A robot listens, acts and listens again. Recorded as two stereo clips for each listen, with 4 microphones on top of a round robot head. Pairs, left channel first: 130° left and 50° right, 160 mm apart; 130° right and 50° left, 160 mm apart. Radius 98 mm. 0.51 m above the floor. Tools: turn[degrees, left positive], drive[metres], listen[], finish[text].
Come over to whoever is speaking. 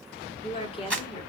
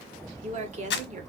Thought: The woman speaking: 80° left.
Action: turn[80]
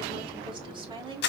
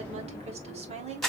Action: drive[1.0]
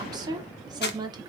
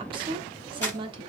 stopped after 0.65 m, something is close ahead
Action: finish[I am next to the woman speaking.]